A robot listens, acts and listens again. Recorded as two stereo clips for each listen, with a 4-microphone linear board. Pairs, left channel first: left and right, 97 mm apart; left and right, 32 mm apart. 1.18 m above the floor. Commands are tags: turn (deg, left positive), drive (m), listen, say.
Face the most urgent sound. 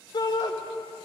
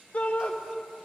<turn deg="50"/>
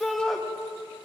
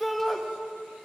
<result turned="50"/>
<say>Facing the shout.</say>